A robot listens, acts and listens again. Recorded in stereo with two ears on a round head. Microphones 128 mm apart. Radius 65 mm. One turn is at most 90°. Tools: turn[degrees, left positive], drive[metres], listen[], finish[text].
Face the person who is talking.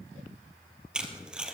Action: listen[]
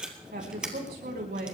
Thought: The woman speaking: about 75° right or 105° right.
Action: turn[-75]
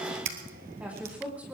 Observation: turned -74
Thought: So it is at 10° right.
Action: turn[-10]
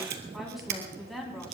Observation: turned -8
Action: finish[Facing the woman speaking.]